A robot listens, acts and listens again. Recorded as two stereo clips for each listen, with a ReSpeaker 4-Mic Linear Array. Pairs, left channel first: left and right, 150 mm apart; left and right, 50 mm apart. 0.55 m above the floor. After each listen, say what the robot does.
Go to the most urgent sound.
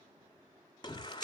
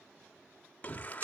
Turn 30° left.
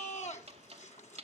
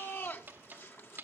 Turn 115° left.
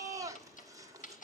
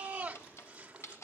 Turn 25° right.
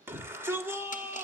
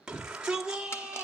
Turn 15° right.
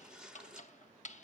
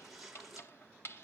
Drive 1.0 m forward.
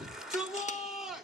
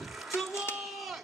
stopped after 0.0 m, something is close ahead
Blocked. The shout is further on, straight ahead.